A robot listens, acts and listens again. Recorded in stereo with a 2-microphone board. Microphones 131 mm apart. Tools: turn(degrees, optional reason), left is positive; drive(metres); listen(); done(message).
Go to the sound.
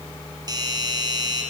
turn(degrees=-30, reason="The doorbell: about 30° right or 150° right.")
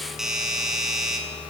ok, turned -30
drive(metres=1.0)
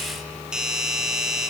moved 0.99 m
drive(metres=1.0)
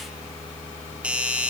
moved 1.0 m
turn(degrees=-10, reason="The doorbell is now 10° right.")
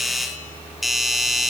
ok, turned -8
drive(metres=1.0)
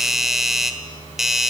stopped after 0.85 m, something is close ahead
done("Arrived at the doorbell, straight ahead.")